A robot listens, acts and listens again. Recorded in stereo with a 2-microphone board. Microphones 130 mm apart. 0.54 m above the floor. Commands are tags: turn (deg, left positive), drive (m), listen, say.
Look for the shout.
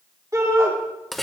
<turn deg="-30"/>
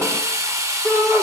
<say>Found it: a shout, straight ahead, 2 to 4 m away.</say>